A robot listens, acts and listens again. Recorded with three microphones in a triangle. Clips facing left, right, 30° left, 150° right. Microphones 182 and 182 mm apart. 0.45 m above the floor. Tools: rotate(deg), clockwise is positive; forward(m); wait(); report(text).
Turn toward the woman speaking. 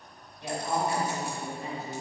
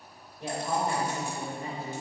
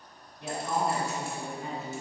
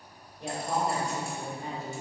rotate(115)
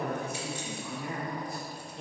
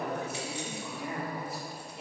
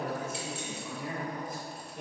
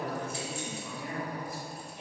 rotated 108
rotate(10)
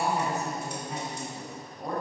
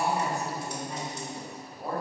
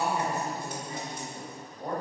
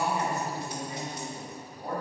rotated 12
report("Facing the woman speaking, 1 to 2 m away.")